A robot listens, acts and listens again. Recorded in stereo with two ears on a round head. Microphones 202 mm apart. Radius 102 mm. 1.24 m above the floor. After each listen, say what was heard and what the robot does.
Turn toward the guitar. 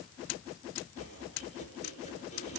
Keep listening.
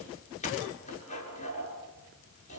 Keep listening.
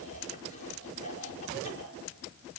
I can't make out a guitar to turn to.